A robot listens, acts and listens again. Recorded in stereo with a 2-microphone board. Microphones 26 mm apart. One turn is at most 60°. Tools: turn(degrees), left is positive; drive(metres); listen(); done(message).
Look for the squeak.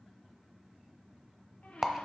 turn(degrees=60)
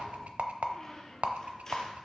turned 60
turn(degrees=15)
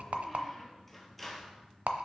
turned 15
done("Found it: a squeak, straight ahead.")